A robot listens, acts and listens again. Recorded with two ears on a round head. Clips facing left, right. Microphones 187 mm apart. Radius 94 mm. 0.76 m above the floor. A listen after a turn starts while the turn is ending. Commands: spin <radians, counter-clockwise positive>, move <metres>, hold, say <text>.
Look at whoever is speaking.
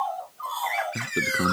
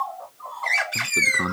spin 0.52
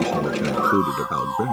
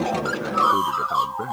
spin 2.36
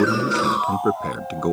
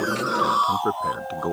spin 0.52
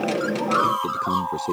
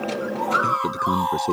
spin -0.17
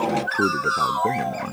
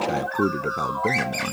say Facing the man speaking.